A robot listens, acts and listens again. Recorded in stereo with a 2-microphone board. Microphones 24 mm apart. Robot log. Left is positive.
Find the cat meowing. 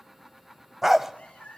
cmd yaw +90
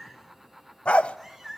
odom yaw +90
end: Found it: a cat meowing, straight ahead.